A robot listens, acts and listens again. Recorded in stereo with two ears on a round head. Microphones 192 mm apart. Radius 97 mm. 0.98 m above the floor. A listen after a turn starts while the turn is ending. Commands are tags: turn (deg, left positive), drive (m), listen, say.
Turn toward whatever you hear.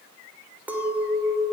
<turn deg="-30"/>
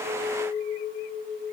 <turn deg="25"/>
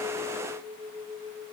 <say>Found it: a clink, straight ahead, 2 to 4 m away.</say>